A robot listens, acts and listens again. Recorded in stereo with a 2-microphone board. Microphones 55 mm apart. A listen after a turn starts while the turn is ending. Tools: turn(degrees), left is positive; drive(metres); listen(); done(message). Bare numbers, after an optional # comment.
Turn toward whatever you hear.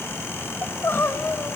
# The crying: about 45° left or 135° left.
turn(45)
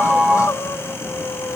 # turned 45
# So it is at 85° left.
turn(85)
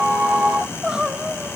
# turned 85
# The crying is now 15° right.
turn(-15)
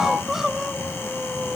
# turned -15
# The crying is now 10° right.
turn(-10)
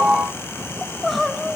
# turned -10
done("Facing the crying, 1 to 2 m away.")